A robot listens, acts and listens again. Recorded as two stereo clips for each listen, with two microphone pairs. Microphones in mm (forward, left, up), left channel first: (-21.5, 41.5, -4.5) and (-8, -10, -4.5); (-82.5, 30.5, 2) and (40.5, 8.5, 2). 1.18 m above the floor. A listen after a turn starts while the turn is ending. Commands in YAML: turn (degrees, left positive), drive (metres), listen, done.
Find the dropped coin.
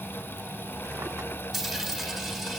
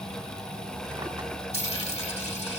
turn: -165
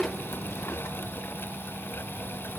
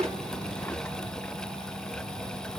done: "I heard a dropped coin from this way, but can't make it out now."